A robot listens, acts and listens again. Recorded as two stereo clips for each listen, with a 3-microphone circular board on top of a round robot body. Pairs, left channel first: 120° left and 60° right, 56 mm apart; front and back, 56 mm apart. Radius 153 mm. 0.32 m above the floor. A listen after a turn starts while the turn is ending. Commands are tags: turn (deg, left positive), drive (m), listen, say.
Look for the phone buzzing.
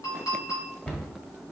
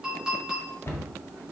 <listen/>
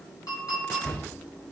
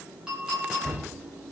<listen/>
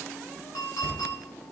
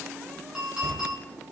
<say>I can't make out a phone buzzing to turn to.</say>